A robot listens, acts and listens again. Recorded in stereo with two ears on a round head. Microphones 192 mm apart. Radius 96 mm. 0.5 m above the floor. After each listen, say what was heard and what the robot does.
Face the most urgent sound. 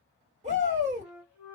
The shout: about 30° right or 150° right. Turn 30° right.
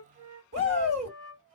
So it is at 115° right. Turn 115° right.
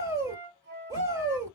The shout is now 20° right. Turn 20° right.
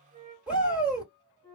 Found it: a shout, straight ahead, 1 to 2 m away.